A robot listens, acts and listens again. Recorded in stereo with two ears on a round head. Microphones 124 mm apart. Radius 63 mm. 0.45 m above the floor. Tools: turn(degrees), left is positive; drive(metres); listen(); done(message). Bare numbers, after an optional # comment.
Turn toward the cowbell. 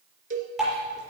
# The cowbell: about 60° right or 120° right.
turn(-60)
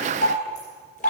listen()
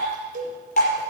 # So it is at 60° right.
turn(-60)
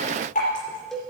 done("Found it: a cowbell, straight ahead, 1 to 2 m away.")